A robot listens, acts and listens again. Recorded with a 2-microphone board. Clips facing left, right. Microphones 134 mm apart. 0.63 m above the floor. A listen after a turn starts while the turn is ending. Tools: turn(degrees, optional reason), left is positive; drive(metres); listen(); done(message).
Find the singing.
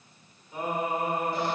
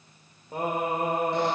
turn(degrees=-65, reason="The singing: about 65° right or 115° right.")
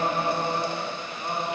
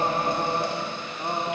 turn(degrees=-35, reason="So it is at 35° right.")
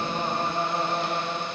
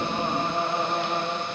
turn(degrees=-20, reason="The singing is now 20° right.")
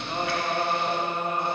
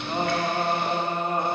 turn(degrees=-40, reason="The singing is now 40° right.")
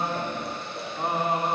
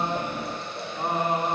done("Facing the singing.")